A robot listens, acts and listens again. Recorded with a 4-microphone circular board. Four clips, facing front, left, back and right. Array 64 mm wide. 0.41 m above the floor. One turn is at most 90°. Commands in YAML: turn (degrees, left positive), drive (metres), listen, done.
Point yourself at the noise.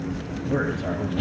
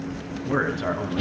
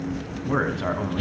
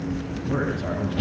turn: 90
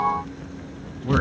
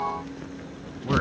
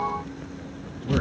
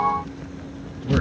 turn: 40
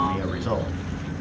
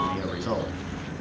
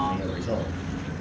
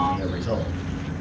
turn: 25
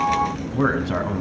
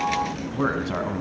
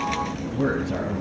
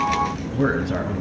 turn: 20
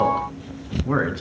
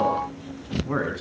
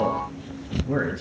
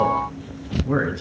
done: "Facing the man speaking, over 4 m away."